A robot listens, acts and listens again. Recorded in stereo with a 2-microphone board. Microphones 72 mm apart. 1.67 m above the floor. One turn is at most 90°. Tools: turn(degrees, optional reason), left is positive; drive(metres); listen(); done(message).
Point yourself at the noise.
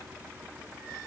listen()
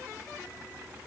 listen()
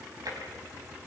turn(degrees=-65, reason="The tapping: about 65° right or 115° right.")
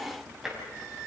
done("Facing the tapping, over 4 m away.")